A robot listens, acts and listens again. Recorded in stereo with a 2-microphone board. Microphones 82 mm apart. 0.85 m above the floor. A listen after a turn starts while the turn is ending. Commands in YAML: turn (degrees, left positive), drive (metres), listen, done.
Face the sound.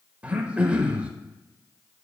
turn: -15
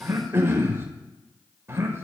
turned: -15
turn: -150
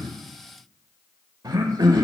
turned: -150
turn: -55
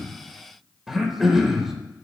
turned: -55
done: "Facing the throat clearing."